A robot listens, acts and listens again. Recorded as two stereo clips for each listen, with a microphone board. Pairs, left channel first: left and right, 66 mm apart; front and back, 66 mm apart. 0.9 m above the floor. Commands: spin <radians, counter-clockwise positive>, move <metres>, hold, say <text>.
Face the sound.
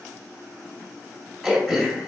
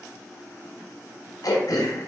say Facing the throat clearing, 2 to 4 m away.